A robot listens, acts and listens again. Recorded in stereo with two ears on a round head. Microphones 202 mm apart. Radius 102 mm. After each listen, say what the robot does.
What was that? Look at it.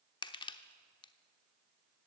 Turn 20° left.
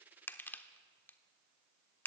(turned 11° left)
Turn 10° left.
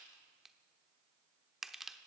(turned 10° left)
Facing the crushing.